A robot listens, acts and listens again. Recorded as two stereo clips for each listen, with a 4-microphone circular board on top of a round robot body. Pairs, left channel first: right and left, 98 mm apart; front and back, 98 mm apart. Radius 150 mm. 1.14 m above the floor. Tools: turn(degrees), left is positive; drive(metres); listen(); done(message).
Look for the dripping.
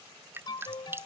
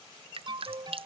turn(degrees=155)
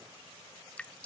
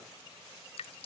turn(degrees=-10)
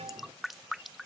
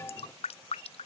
done("Found it: dripping, straight ahead.")